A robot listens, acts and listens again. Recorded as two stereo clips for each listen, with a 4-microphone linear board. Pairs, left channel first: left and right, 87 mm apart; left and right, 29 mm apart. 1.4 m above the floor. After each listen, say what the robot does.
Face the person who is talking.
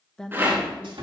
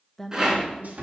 Turn 30° left.
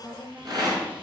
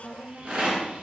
Turn 25° right.
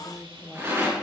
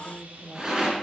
Found it: a woman speaking, straight ahead, 1 to 2 m away.